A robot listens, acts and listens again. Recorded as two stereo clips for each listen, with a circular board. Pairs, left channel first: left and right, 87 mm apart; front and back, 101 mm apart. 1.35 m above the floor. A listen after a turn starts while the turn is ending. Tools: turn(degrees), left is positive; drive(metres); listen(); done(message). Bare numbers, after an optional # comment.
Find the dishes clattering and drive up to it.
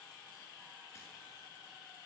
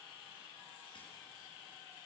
listen()
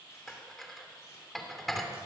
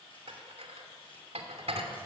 # The dishes clattering: 175° left.
turn(175)
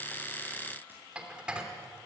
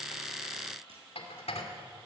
# The dishes clattering is now 15° right.
turn(-15)
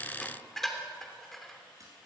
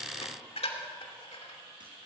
drive(1.0)
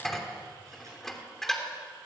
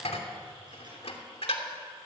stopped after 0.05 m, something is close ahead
done("Something is in my way. I am facing the dishes clattering but have not reached it.")